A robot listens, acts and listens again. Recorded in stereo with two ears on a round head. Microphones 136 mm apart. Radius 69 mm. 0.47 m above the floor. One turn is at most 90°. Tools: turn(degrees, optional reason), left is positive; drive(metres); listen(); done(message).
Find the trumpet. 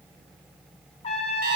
turn(degrees=40, reason="The trumpet: about 40° left or 140° left.")
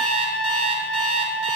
done("Found it: a trumpet, straight ahead, under 1 m away.")